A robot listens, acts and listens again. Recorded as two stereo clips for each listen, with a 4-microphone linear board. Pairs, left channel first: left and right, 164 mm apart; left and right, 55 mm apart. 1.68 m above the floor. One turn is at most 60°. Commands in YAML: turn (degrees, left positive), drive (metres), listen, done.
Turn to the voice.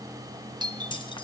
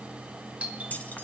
listen: true
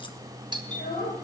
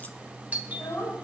turn: 60
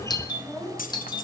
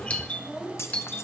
done: "Facing the child speaking."